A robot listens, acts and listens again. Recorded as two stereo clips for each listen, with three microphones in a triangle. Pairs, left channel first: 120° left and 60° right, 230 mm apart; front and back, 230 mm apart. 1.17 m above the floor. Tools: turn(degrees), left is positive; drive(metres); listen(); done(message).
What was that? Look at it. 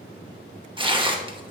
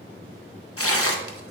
done("Facing the tearing paper.")